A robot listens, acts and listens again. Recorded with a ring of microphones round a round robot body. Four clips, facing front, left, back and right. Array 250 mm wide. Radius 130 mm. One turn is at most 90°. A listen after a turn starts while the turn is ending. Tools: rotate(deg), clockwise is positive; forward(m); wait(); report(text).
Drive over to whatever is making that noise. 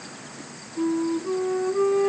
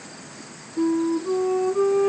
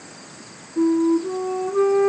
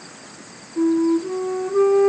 rotate(90)
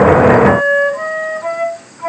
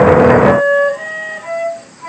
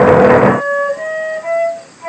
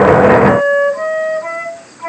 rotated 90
rotate(35)
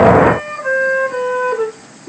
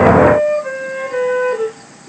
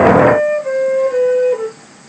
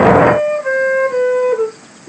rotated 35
rotate(10)
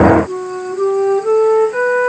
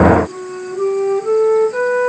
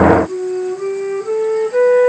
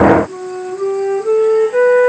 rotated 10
forward(1.0)
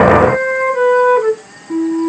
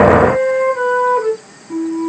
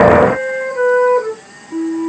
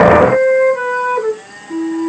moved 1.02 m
forward(1.0)
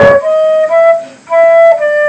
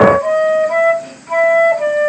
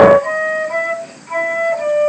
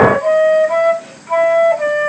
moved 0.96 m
forward(1.0)
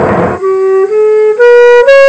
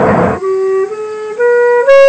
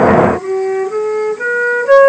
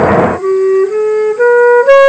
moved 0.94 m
forward(1.0)
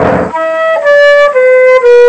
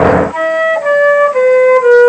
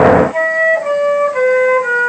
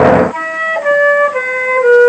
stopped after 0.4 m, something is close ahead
report("Arrived at the flute, straight ahead.")